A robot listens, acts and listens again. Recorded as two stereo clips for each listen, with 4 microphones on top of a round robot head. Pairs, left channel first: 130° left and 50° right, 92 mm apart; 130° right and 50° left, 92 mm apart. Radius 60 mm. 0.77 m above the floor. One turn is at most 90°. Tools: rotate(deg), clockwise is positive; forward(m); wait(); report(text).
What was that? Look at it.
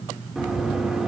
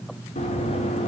rotate(90)
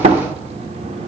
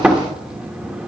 rotate(30)
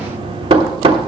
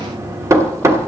rotate(15)
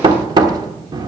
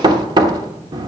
report("Found it: knocking, straight ahead.")